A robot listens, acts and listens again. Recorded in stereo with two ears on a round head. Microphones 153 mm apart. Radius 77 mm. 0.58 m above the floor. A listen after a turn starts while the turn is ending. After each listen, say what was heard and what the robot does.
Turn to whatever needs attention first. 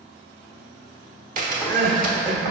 The crying: about 50° right or 130° right. Turn 50° right.
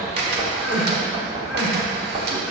Found it: crying, straight ahead, 1 to 2 m away.